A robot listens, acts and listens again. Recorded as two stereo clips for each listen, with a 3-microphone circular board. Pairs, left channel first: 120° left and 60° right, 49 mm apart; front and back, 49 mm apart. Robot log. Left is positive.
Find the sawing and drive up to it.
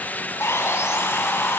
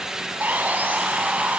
note: The sawing: 130° left.
cmd yaw +130
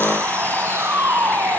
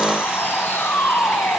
note: The sawing is now 35° right.
cmd yaw -35
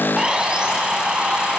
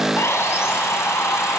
note: The sawing is now 10° left.
cmd yaw +10
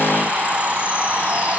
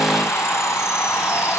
cmd fwd 1.0
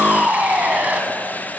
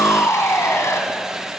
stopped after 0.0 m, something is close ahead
end: Something is in my way. I am facing the sawing but have not reached it.